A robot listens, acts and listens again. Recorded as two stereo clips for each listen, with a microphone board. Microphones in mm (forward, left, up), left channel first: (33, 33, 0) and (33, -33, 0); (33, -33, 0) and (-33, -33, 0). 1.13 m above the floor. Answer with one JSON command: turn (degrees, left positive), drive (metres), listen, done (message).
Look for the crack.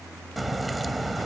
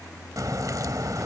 {"turn": 180}
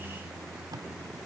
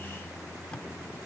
{"done": "I heard a crack from this way, but can't make it out now."}